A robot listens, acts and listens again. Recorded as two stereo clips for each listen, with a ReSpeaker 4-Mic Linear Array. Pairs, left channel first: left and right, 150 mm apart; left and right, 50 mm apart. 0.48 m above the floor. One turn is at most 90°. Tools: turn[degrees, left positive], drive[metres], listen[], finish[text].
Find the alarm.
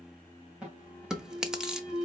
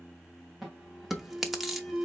Action: turn[-30]
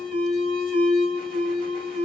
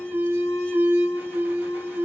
Thought: So it is at 140° right.
Action: turn[-90]
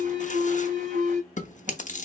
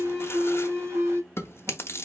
Thought: The alarm is now 65° right.
Action: turn[-65]
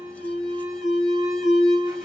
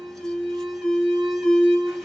Action: finish[Found it: an alarm, straight ahead, 2 to 4 m away.]